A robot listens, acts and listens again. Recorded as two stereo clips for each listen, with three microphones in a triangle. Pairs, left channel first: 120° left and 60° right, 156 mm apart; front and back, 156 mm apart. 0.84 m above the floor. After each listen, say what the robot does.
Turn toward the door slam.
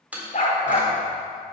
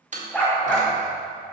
Turn 140° right.
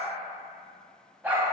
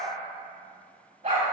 Facing where the door slam came from. I can't hear it now.